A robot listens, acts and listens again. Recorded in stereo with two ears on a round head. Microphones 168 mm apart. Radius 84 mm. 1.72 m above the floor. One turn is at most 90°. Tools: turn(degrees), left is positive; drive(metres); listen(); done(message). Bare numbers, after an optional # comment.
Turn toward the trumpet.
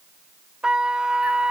turn(-30)
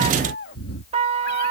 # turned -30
# So it is at 145° right.
turn(-90)
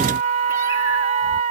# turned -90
# The trumpet is now 40° right.
turn(-40)
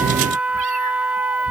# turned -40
done("Facing the trumpet.")